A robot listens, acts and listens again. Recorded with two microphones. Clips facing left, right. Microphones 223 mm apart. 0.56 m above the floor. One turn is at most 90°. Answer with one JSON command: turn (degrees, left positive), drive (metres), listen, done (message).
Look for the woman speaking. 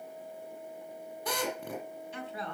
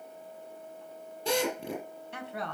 {"turn": -70}
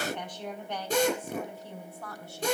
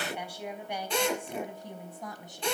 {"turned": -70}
{"turn": -15}
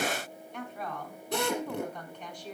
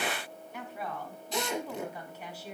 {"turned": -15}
{"done": "Facing the woman speaking."}